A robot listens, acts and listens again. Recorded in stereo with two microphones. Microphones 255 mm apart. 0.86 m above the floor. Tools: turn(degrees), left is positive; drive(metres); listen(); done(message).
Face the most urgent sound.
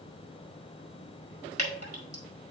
listen()
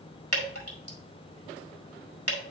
listen()
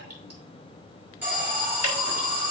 turn(degrees=-30)
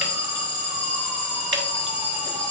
turn(degrees=25)
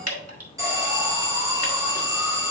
turn(degrees=-15)
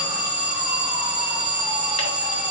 done("Facing the alarm, 2 to 4 m away.")